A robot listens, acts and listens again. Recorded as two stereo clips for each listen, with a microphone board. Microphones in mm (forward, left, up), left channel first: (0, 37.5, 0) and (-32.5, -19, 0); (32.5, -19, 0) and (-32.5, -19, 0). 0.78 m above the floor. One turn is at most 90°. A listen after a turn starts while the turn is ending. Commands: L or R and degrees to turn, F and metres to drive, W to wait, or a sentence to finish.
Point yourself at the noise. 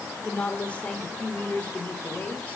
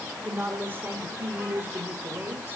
L90
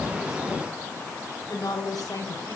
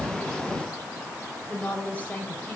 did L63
L65
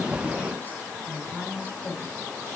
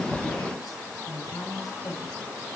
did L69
Found it: a woman speaking, straight ahead, over 4 m away.